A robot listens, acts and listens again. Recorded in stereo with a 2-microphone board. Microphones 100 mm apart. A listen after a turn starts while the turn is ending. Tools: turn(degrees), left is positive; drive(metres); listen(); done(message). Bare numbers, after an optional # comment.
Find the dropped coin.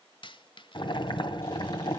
# The dropped coin: about 55° left or 125° left.
turn(55)
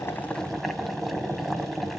listen()
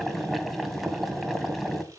done("I heard a dropped coin, but can't make it out now. It was about straight ahead or 70° left.")